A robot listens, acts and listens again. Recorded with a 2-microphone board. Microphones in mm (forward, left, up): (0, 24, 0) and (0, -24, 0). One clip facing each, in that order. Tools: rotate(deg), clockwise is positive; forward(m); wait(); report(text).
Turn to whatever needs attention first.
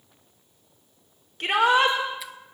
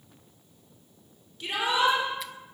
rotate(-60)
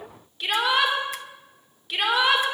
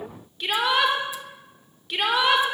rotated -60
report("Facing the shout.")